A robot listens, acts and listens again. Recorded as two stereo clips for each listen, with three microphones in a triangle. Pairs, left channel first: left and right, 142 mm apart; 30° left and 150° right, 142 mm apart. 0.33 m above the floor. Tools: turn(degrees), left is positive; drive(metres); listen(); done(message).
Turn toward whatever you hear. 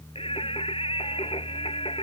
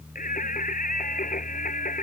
turn(degrees=40)
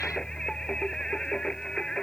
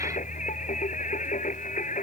done("Found it: singing, straight ahead.")